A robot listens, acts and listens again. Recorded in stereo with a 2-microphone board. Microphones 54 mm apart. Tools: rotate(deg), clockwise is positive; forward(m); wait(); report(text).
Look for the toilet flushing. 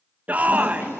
rotate(-50)
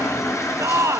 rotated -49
rotate(-80)
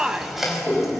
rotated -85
report("Found it: a toilet flushing, straight ahead.")